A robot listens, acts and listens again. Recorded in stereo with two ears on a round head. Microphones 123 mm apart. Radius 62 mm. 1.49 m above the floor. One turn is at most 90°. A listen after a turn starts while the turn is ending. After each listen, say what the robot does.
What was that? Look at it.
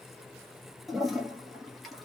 Turn 30° left.
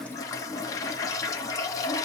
Turn 90° left.
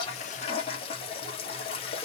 Turn 50° left.
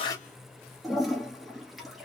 Found it: a toilet flushing, straight ahead, 1 to 2 m away.